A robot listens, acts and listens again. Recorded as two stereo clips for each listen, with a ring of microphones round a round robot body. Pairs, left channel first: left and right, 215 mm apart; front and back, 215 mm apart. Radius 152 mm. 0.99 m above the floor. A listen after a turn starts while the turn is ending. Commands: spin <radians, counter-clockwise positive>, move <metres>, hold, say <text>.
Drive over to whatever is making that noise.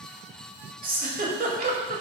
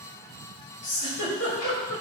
spin -0.70
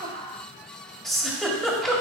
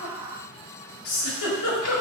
move 1.0
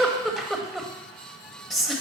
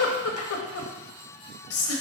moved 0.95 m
move 1.0
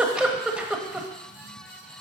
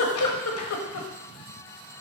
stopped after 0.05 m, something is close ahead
say Arrived at the giggle, straight ahead.